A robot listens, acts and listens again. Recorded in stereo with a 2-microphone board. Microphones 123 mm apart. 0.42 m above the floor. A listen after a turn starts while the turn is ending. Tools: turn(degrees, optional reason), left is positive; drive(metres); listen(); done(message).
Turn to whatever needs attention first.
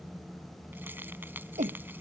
turn(degrees=-90)
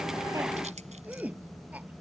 turn(degrees=-10, reason="So it is at 10° right.")
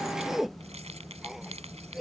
done("Found it: a shout, straight ahead.")